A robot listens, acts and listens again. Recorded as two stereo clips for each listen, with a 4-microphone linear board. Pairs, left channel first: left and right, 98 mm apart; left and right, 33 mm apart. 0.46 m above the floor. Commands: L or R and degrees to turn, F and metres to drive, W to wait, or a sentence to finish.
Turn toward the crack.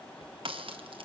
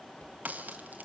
R65
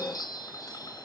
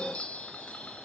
W
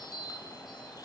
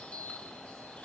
I heard a crack, but can't make it out now. It was about straight ahead or 50° right.